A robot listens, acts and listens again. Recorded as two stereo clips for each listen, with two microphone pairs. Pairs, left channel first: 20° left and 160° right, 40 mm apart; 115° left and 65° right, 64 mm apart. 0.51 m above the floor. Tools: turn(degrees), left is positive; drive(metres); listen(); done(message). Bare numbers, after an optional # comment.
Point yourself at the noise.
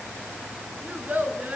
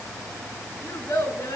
# The child speaking: 140° left.
turn(140)
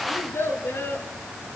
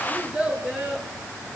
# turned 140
# The child speaking is now 10° left.
turn(10)
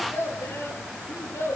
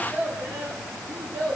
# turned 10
done("Facing the child speaking, over 4 m away.")